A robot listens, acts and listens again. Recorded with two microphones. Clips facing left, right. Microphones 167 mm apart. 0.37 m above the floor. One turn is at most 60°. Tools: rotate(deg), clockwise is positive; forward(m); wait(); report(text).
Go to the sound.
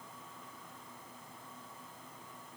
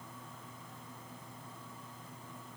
wait()
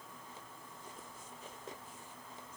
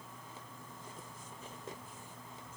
wait()
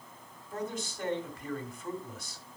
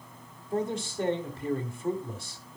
rotate(30)
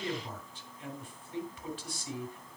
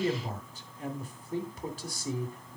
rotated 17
rotate(60)
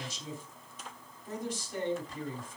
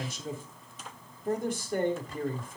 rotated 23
rotate(60)
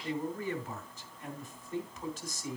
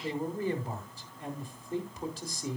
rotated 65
rotate(40)
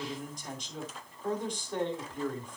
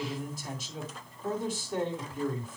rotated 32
rotate(10)
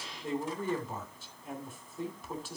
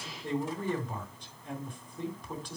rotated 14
forward(1.0)
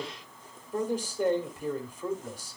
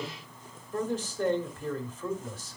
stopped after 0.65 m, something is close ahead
rotate(-15)
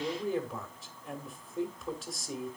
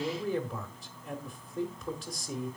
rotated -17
report("I am next to the man speaking.")